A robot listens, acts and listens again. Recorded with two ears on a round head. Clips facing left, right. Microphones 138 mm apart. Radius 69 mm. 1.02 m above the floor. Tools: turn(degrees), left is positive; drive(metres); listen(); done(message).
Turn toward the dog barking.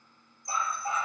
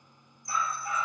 turn(degrees=25)
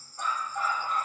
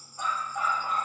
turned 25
done("Facing the dog barking.")